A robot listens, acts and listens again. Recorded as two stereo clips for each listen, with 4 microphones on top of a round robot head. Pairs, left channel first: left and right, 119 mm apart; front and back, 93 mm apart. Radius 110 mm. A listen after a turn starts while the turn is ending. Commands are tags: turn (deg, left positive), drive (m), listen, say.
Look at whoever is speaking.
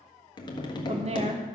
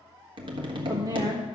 <turn deg="-125"/>
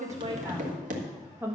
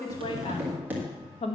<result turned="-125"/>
<turn deg="-15"/>
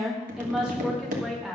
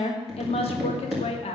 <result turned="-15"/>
<say>Facing the woman speaking, 1 to 2 m away.</say>